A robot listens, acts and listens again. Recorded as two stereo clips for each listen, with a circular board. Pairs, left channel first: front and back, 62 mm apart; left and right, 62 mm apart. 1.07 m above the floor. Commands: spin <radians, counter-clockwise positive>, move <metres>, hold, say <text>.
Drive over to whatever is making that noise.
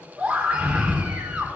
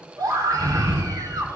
spin -1.83
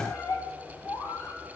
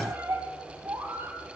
spin -0.70
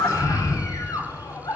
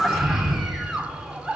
move 1.0
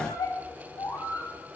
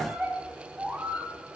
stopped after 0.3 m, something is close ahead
spin -0.17
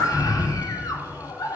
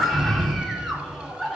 say Blocked. The scream is further on, straight ahead.